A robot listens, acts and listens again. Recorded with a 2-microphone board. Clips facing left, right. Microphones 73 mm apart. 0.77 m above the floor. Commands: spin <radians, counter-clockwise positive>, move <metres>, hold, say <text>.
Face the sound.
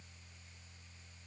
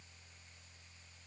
hold
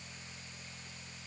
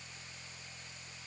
hold
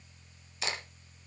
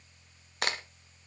spin -0.96
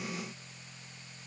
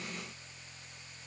hold
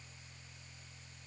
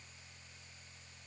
say I heard a crack, but can't make it out now. It was about straight ahead or 70° right.